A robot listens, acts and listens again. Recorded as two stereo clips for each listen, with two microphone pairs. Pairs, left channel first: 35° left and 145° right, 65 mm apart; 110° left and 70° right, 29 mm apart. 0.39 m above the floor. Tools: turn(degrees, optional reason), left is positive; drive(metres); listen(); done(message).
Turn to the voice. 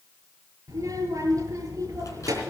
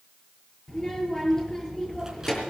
turn(degrees=180, reason="The child speaking: straight behind.")
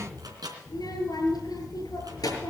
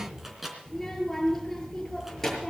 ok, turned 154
turn(degrees=30, reason="The child speaking is now 30° left.")
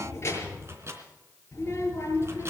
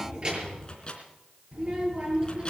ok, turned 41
turn(degrees=-10, reason="The child speaking is now 10° right.")
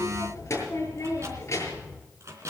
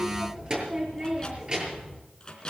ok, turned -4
done("Found it: a child speaking, straight ahead.")